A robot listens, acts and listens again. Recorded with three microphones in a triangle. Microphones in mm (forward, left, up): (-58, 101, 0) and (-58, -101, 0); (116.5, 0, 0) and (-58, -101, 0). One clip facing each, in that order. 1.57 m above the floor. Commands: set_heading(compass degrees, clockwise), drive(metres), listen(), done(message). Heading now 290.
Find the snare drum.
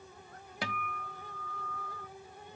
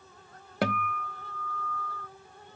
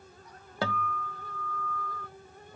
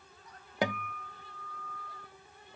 listen()
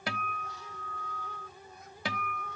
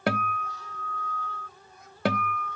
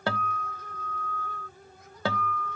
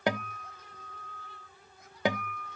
listen()
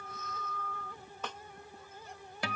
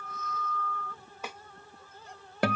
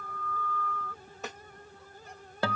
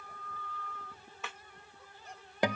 set_heading(300)
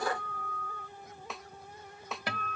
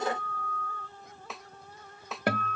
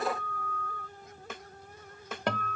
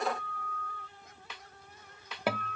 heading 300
done("Facing the snare drum.")